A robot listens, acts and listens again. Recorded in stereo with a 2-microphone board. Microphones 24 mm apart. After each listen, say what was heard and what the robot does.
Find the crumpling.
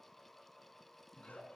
Keep listening.
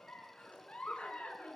Keep listening.
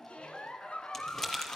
The crumpling: about 15° left or 165° left. Turn 15° left.
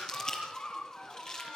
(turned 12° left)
So it is at 150° left. Turn 150° left.
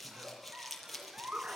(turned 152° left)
Found it: crumpling, straight ahead, over 4 m away.